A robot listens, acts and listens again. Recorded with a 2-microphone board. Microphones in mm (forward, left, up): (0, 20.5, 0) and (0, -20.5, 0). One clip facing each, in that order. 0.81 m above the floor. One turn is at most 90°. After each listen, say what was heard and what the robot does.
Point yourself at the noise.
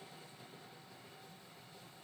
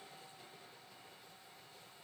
Keep listening.
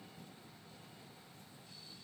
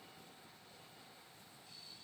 Keep listening.
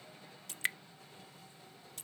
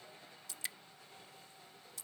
The dripping: about 50° left or 130° left. Turn 50° left.
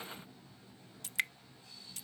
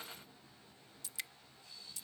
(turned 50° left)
So it is at 70° left. Turn 70° left.
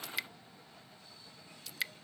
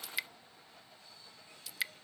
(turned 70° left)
Facing the dripping.